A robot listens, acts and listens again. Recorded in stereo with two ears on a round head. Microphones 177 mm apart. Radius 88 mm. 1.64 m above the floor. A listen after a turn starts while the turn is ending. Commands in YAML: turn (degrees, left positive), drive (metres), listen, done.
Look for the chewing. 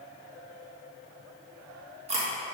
turn: -35
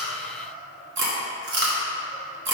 turn: -105
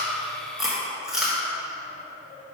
done: "Facing the chewing, 1 to 2 m away."